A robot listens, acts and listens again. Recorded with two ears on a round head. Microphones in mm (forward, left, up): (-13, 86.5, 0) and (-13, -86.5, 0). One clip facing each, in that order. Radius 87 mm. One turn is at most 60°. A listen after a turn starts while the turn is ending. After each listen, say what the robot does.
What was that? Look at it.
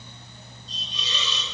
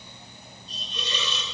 Turn 50° right.
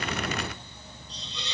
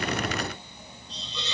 Turn 60° right.
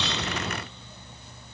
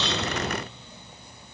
Turn 20° right.
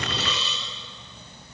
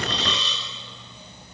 Found it: a hiss, straight ahead, over 4 m away.